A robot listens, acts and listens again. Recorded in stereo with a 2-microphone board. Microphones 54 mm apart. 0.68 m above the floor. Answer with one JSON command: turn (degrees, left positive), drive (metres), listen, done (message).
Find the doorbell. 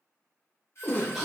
{"turn": 55}
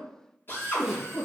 {"listen": true}
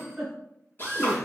{"listen": true}
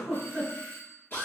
{"turn": 50}
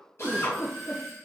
{"done": "Found it: a doorbell, straight ahead, 1 to 2 m away."}